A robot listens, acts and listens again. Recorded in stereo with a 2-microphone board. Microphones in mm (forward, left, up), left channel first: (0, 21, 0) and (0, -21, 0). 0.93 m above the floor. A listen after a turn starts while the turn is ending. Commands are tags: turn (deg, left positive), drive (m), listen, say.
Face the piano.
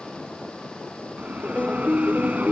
<turn deg="20"/>
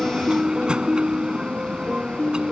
<say>Found it: a piano, straight ahead.</say>